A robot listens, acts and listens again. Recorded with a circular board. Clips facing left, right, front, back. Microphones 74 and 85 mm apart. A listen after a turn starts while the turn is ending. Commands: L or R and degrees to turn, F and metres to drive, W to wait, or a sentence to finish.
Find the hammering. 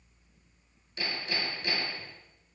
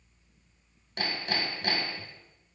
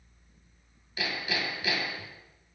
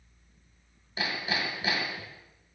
R120
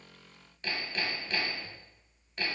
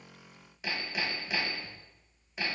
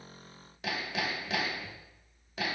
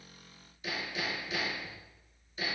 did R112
R10
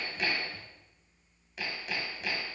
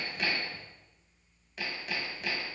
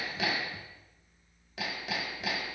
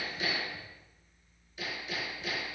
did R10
Found it: hammering, straight ahead.